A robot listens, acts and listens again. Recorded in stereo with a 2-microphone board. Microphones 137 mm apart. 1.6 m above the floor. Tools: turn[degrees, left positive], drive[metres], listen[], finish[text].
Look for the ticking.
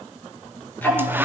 Action: turn[30]
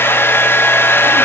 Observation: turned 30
Action: listen[]
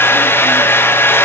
Action: listen[]
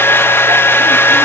Action: finish[I heard ticking, but can't make it out now. It was about 15° right or 135° left.]